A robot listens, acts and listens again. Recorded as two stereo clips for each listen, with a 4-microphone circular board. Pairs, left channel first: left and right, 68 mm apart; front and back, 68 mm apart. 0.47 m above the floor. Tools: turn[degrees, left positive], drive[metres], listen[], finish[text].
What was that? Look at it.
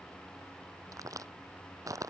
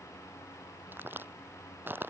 Thought: The crack: 120° right.
Action: turn[-120]
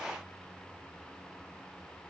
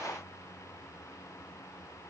Action: finish[I heard a crack from this way, but can't make it out now.]